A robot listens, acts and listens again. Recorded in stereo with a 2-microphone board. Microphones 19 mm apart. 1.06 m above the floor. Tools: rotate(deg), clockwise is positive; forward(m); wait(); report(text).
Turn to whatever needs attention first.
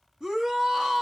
rotate(35)
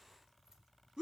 rotate(105)
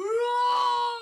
report("Found it: a shout, straight ahead.")